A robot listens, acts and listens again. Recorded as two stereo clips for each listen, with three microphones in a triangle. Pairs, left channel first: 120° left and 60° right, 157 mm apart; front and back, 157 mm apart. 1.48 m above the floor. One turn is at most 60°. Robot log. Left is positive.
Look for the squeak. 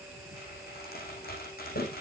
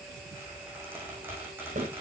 note: The squeak: 105° left.
cmd yaw +60
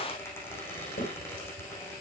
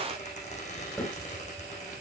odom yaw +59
note: The squeak is now 45° left.
cmd yaw +45
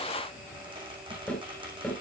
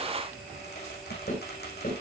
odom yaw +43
end: Facing the squeak.